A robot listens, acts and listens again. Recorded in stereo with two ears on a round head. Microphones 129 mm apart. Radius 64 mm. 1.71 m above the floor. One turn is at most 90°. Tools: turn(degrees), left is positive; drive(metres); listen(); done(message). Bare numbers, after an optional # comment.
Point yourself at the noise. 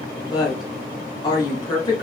# The woman speaking: about 30° left or 150° left.
turn(30)
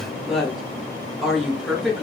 done("Found it: a woman speaking, straight ahead.")